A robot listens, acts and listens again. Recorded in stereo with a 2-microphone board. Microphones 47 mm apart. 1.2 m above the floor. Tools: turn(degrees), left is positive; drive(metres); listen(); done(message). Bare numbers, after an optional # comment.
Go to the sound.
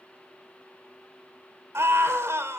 turn(-90)
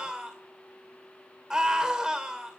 # So it is at 15° right.
turn(-15)
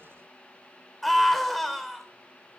drive(1.0)
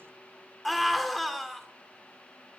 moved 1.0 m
drive(1.0)
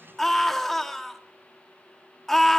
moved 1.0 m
drive(1.0)
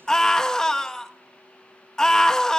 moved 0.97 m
# The scream is now 15° left.
turn(15)
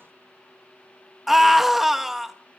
drive(1.0)
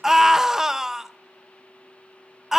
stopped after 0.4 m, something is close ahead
# The scream is now 10° right.
turn(-10)
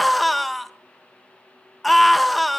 done("I am next to the scream.")